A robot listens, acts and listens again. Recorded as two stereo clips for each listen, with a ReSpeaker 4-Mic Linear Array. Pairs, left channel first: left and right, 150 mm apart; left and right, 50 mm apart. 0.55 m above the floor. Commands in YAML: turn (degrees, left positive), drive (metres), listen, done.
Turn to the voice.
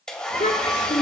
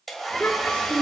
turn: 50
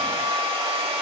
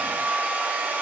listen: true
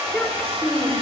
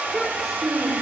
done: "Found it: a child speaking, straight ahead."